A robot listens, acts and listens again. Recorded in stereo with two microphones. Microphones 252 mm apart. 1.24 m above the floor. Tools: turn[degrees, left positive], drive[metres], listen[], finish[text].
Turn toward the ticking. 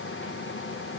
Action: listen[]
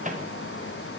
Action: listen[]
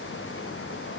Action: finish[I can't make out ticking.]